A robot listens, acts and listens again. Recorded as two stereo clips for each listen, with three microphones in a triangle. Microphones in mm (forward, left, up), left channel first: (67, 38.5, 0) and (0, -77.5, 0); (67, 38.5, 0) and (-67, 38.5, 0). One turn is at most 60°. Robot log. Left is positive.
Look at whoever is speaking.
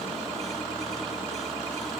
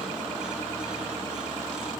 cmd idle
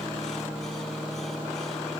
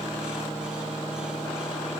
cmd idle
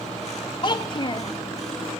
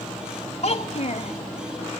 note: The child speaking: 15° left.
cmd yaw +15
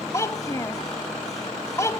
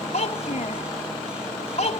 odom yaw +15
end: Found it: a child speaking, straight ahead, 1 to 2 m away.